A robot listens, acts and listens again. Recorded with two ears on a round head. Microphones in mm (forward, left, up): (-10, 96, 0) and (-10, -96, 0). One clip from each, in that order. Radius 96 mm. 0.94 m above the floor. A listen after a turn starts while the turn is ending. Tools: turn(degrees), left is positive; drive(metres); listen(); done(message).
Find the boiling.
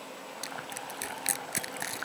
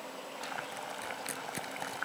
turn(degrees=-20)
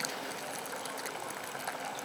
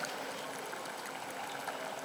listen()
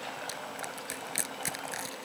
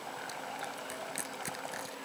listen()
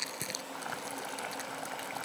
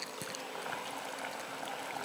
done("Found it: boiling, straight ahead.")